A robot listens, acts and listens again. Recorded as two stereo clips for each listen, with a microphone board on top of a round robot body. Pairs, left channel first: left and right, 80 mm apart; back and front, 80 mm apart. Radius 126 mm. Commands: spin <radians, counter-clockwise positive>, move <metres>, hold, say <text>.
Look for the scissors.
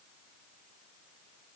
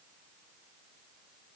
hold
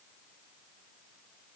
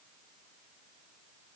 hold
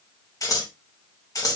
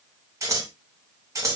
spin 0.87
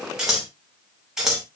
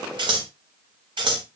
say Facing the scissors, 2 to 4 m away.